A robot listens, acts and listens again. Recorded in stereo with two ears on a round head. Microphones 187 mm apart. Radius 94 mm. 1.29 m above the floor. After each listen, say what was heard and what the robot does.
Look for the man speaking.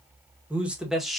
Turn 30° left.
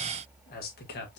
So it is at 125° left. Turn 125° left.
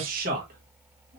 The man speaking is now 40° right. Turn 40° right.
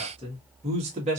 The man speaking is now 30° right. Turn 30° right.
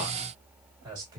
The man speaking is now 20° right. Turn 20° right.
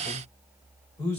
The man speaking is now 10° left. Turn 10° left.
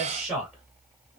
Facing the man speaking, 2 to 4 m away.